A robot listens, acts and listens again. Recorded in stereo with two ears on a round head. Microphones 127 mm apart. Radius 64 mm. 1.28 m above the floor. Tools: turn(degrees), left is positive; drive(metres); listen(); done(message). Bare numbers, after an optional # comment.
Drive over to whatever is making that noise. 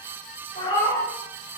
# The cat meowing: about 40° left or 140° left.
turn(40)
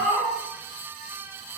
drive(1.0)
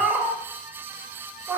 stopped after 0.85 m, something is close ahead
done("I am next to the cat meowing.")